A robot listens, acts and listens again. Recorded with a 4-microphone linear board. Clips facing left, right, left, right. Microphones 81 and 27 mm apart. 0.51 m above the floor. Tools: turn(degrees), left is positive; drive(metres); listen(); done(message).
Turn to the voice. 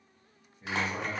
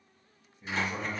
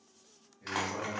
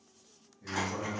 turn(degrees=35)
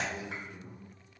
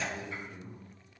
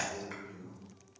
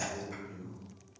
turn(degrees=10)
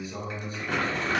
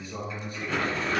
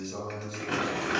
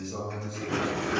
done("Found it: a man speaking, straight ahead.")